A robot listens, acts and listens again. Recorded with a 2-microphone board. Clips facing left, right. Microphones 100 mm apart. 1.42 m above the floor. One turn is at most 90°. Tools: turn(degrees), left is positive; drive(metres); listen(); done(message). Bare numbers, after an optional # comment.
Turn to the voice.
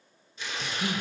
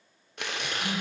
# The man speaking: about 50° left or 130° left.
turn(50)
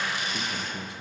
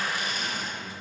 # So it is at 80° left.
turn(80)
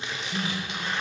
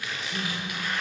done("Facing the man speaking, under 1 m away.")